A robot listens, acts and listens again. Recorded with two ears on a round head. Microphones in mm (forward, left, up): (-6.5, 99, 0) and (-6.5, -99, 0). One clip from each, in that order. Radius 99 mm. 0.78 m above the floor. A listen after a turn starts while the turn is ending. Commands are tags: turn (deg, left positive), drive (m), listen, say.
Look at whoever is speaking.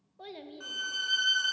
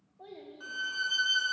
<turn deg="90"/>
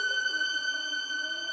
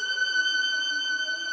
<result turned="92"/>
<listen/>
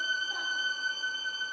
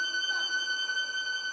<listen/>
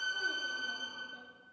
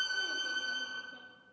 <say>Facing where the child speaking came from. I can't hear it now.</say>